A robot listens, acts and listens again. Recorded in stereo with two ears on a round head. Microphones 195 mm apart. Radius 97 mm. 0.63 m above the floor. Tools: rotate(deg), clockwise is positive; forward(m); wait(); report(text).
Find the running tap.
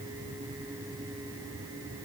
wait()
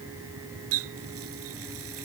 rotate(75)
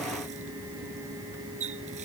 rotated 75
rotate(35)
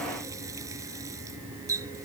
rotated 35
rotate(15)
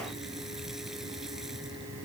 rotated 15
wait()
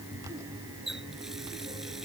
report("Found it: a running tap, straight ahead.")